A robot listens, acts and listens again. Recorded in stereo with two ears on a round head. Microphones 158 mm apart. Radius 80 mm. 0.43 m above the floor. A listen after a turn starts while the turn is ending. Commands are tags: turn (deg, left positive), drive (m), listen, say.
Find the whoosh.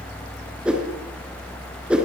<turn deg="-30"/>
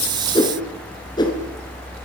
<turn deg="25"/>
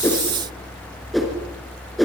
<say>Facing the whoosh.</say>